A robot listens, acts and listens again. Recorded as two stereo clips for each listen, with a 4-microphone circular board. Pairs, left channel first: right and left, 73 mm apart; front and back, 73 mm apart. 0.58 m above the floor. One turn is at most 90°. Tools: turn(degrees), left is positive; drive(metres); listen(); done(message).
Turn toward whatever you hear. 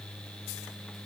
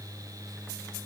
listen()
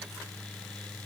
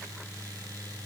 listen()
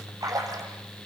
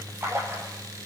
turn(degrees=90)
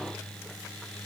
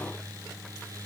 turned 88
turn(degrees=40)
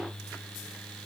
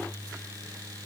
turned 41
done("I heard a splash from this way, but can't make it out now.")